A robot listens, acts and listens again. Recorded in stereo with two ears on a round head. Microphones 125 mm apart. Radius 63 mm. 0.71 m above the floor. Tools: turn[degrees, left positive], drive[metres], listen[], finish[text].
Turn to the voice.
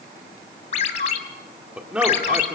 Action: turn[-30]
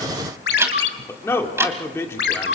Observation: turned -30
Thought: So it is at 20° left.
Action: turn[20]
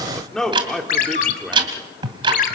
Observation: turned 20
Action: finish[Found it: a man speaking, straight ahead.]